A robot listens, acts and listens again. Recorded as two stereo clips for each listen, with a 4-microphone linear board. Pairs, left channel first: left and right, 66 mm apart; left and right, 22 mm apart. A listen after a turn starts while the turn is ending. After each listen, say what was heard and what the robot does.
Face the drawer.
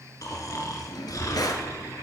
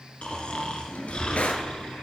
The drawer: about 75° left or 105° left. Turn 75° left.
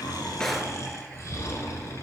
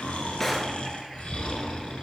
Keep listening.
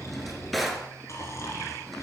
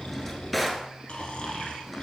Facing the drawer.